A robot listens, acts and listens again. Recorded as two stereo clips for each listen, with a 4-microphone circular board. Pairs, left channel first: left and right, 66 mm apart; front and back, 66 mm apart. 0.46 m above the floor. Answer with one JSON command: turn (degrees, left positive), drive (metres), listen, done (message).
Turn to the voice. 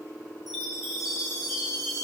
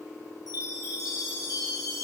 {"listen": true}
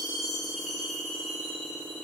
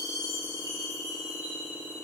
{"listen": true}
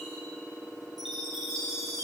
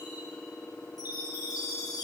{"done": "I can't make out anyone speaking to turn to."}